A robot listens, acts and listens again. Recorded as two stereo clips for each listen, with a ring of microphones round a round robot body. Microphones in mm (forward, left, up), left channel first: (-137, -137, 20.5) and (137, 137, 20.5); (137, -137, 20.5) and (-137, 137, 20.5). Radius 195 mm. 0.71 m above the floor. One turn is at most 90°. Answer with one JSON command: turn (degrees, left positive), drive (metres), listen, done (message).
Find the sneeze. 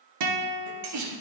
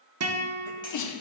{"done": "Found it: a sneeze, straight ahead."}